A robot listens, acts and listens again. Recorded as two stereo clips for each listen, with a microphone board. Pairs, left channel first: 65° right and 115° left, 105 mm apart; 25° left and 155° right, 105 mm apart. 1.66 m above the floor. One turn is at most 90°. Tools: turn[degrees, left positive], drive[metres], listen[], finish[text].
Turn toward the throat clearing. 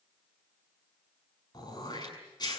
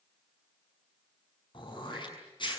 Thought: The throat clearing: 20° right.
Action: turn[-20]
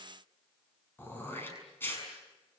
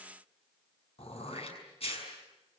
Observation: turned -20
Action: finish[Facing the throat clearing, over 4 m away.]